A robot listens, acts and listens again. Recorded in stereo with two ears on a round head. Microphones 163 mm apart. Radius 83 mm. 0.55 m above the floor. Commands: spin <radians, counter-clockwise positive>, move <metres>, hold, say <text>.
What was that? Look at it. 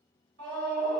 spin -1.22
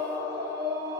spin -0.35
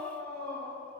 say Facing the scream.